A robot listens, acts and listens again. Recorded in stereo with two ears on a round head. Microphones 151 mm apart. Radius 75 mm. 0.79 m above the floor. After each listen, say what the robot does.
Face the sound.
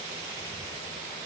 Keep listening.
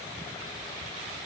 Keep listening.
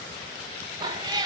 Turn 25° right.
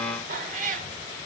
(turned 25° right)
Turn 130° right.
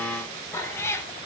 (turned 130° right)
Turn 15° left.
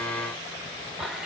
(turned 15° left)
Facing the cat meowing, 1 to 2 m away.